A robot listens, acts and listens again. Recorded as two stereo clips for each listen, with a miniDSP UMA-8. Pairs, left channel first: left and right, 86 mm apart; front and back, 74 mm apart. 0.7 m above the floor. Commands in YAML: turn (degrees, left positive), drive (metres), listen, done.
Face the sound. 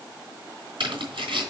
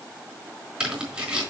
turn: -105
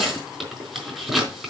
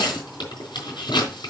done: "Found it: tearing paper, straight ahead, over 4 m away."